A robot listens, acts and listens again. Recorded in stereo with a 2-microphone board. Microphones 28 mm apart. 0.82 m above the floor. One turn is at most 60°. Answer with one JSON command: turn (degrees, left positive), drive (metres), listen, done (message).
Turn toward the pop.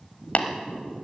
{"listen": true}
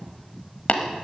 {"listen": true}
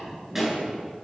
{"turn": -30}
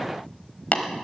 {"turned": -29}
{"listen": true}
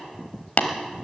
{"done": "I heard a pop, but can't make it out now. It was about 20° left or 140° right."}